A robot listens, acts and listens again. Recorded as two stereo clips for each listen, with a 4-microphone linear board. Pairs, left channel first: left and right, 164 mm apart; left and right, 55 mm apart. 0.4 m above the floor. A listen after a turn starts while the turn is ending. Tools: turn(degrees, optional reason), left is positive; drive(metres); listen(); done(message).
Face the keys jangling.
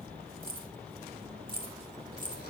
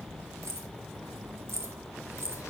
turn(degrees=-55, reason="The keys jangling: about 55° right or 125° right.")
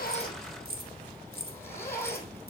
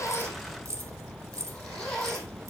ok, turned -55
turn(degrees=-75, reason="So it is at 75° right.")
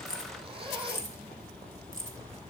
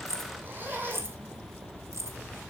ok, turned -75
turn(degrees=-55, reason="The keys jangling is now 55° right.")
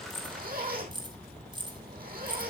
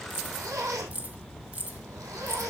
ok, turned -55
turn(degrees=-30, reason="The keys jangling is now 30° right.")
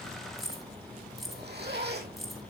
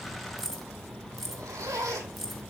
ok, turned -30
done("Facing the keys jangling.")